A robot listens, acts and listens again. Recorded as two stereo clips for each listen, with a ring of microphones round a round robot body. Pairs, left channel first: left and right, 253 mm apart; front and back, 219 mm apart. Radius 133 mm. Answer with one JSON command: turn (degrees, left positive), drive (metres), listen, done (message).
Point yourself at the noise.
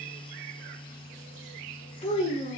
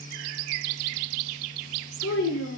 {"turn": 20}
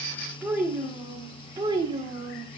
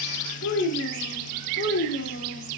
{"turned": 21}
{"turn": -25}
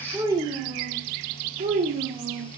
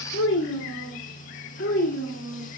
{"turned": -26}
{"turn": -40}
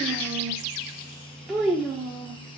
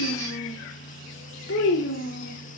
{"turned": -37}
{"done": "Found it: a child speaking, straight ahead, 1 to 2 m away."}